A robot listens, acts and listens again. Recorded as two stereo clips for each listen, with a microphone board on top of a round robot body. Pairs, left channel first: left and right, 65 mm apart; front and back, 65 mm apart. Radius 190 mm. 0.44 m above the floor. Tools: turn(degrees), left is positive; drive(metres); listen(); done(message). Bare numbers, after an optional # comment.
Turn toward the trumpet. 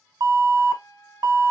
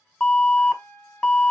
# The trumpet: 60° left.
turn(60)
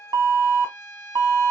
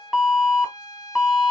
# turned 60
# The trumpet is now 40° left.
turn(40)
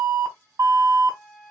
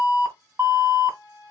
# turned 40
done("Found it: a trumpet, straight ahead, under 1 m away.")